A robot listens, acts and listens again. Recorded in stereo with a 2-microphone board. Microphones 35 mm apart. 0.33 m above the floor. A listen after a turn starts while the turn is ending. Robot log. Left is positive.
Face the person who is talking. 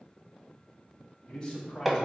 note: The man speaking: about 15° left or 165° left.
cmd yaw +15
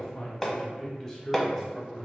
cmd yaw -30
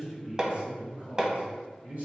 note: So it is at 130° right.
cmd yaw -130
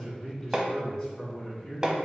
note: The man speaking is now 10° left.
cmd yaw +10
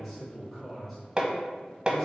end: Found it: a man speaking, straight ahead, 2 to 4 m away.